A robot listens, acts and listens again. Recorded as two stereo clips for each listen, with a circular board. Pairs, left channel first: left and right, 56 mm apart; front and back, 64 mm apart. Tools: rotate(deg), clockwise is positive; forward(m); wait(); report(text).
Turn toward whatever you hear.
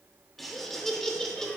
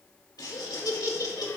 rotate(-10)
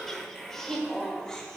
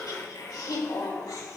rotate(-15)
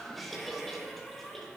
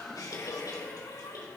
report("Facing the laughter, 2 to 4 m away.")